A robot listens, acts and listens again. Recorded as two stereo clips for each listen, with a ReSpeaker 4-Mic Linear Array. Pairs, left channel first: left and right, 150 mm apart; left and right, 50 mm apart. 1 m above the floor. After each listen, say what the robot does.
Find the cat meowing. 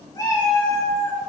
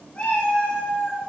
Turn 25° left.
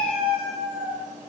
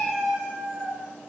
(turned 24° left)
Found it: a cat meowing, straight ahead.